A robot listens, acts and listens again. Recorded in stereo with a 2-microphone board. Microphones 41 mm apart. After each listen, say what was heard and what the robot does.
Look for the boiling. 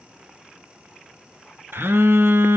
Keep listening.
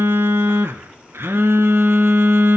Keep listening.
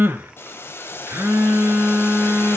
Turn 90° left.
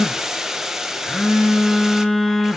So it is at 10° right. Turn 10° right.
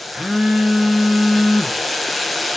Facing the boiling.